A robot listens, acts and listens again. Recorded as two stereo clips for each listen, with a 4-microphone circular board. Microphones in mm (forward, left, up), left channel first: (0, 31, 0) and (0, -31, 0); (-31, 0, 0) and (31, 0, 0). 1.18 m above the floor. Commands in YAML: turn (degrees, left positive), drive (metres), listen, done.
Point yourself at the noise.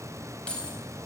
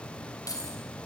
turn: 165
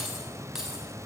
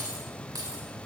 done: "Found it: keys jangling, straight ahead."